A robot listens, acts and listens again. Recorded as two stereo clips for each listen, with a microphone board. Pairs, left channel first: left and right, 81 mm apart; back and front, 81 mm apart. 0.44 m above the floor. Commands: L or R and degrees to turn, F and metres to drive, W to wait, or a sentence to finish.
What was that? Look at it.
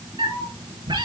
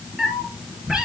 R85
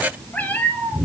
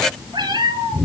L25
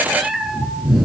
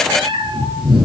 Found it: a cat meowing, straight ahead, 2 to 4 m away.